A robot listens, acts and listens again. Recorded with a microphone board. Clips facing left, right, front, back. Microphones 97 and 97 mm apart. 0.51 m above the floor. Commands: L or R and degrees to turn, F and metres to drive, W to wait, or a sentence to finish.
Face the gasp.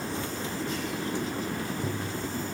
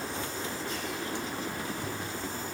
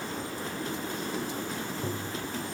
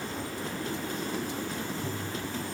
W
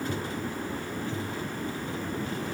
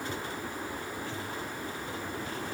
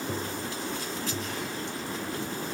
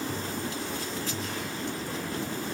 W
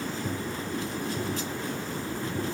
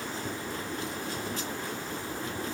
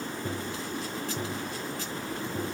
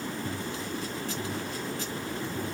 I can't make out a gasp to turn to.